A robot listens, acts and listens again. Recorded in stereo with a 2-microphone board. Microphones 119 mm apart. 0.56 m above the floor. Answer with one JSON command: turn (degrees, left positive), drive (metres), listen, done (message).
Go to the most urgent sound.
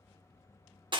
{"listen": true}
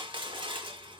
{"listen": true}
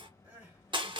{"turn": -30}
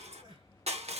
{"turn": -135}
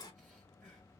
{"drive": 1.0}
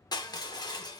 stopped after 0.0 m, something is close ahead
{"listen": true}
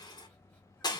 {"listen": true}
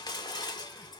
{"done": "Facing where the crying came from. I can't hear it now. I did not reach it."}